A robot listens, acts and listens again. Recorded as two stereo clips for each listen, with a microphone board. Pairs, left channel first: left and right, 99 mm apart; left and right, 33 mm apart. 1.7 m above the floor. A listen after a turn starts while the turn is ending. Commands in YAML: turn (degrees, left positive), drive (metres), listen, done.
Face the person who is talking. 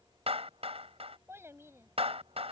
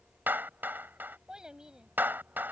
turn: -25
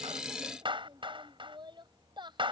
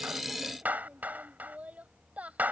turn: -130
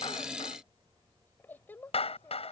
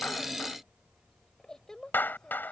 turn: 20
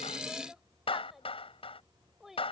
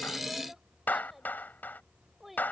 done: "Facing the child speaking."